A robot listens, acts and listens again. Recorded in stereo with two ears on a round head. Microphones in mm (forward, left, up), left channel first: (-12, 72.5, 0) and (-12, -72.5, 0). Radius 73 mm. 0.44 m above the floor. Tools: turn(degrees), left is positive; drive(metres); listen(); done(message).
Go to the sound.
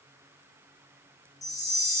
turn(degrees=20)
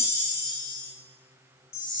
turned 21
turn(degrees=135)
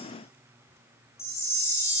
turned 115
turn(degrees=20)
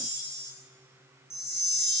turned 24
drive(metres=1.0)
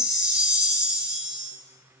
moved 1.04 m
turn(degrees=-10)
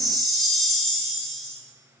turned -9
drive(metres=1.0)
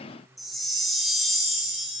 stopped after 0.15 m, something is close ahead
done("Arrived at the chime, straight ahead.")